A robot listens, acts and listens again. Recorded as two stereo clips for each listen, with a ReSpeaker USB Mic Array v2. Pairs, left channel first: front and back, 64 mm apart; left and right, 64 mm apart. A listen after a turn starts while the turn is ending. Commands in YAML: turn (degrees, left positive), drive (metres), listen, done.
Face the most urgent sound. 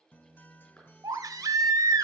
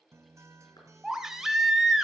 turn: -170
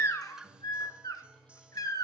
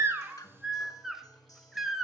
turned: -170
done: "Found it: a baby crying, straight ahead."